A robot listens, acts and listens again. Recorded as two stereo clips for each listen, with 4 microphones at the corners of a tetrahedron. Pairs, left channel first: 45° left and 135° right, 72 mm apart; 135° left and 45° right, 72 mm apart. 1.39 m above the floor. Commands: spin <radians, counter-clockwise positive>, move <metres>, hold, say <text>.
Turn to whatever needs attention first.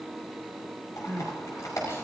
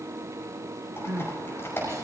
say Found it: crying, straight ahead, over 4 m away.